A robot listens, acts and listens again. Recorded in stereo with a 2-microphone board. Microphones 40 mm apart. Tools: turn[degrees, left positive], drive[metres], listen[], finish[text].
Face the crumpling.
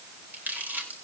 Thought: The crumpling: about 50° right or 130° right.
Action: turn[-50]
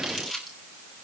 Action: finish[Facing the crumpling.]